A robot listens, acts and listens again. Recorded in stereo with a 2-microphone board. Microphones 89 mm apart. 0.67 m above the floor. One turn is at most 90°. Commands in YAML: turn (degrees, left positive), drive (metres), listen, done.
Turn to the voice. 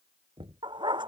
listen: true
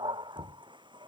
listen: true
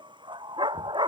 done: "I can't make out anyone speaking, only knocking and a dog barking."